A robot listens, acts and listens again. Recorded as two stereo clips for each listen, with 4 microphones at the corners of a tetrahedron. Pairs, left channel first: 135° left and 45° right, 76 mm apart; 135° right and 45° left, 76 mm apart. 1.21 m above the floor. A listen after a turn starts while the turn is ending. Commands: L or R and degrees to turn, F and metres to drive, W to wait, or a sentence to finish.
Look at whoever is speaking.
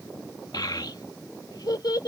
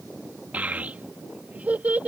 L110
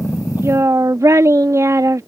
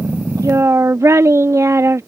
Found it: a child speaking, straight ahead.